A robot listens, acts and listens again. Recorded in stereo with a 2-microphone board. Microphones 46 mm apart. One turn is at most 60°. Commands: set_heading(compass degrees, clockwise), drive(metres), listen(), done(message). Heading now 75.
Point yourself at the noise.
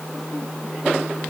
listen()
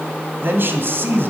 set_heading(135)
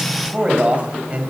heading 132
set_heading(167)
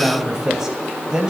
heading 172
set_heading(192)
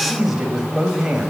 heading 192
set_heading(207)
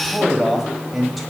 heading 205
done("Found it: a man speaking, straight ahead.")